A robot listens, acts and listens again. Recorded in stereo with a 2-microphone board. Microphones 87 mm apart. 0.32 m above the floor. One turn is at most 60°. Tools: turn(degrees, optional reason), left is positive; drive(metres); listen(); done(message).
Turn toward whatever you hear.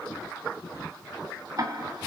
turn(degrees=-50, reason="The ticking: about 50° right or 130° right.")
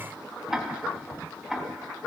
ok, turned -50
done("Facing the ticking, 2 to 4 m away.")